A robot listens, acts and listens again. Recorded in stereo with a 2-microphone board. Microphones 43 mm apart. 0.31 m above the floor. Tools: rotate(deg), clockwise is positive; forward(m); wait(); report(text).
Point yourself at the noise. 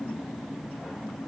wait()
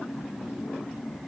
wait()
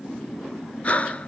rotate(-35)
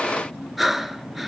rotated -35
report("Facing the breathing, under 1 m away.")